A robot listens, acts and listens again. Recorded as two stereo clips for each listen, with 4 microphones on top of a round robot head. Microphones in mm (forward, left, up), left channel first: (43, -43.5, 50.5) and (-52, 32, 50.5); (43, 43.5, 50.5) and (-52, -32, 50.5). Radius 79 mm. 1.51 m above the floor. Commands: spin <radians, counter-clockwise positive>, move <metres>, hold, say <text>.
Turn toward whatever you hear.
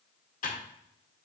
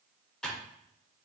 spin -0.79
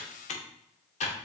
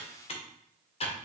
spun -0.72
say Facing the typing on a keyboard.